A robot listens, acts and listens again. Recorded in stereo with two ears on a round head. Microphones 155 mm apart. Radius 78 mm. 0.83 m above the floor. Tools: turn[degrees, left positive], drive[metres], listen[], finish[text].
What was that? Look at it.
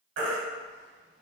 Thought: The baby crying: about 75° right or 105° right.
Action: turn[-75]
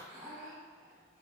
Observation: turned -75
Action: listen[]
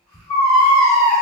Action: finish[Facing the baby crying, under 1 m away.]